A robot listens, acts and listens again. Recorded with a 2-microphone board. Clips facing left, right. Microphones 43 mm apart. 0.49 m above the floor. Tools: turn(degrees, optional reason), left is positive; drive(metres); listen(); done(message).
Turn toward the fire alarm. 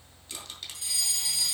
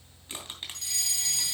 turn(degrees=30)
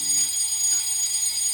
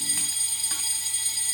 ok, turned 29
turn(degrees=-20, reason="So it is at 20° right.")
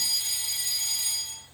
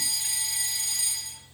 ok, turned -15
done("Found it: a fire alarm, straight ahead.")